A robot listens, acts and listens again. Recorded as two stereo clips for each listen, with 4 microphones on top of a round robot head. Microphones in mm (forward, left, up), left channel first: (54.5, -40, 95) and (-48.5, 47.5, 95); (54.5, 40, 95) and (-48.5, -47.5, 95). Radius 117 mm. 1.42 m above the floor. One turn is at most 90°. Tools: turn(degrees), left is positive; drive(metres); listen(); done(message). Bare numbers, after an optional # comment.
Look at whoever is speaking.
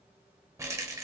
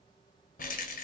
listen()
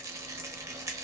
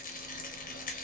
listen()
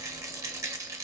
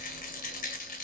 done("I can't make out anyone speaking to turn to.")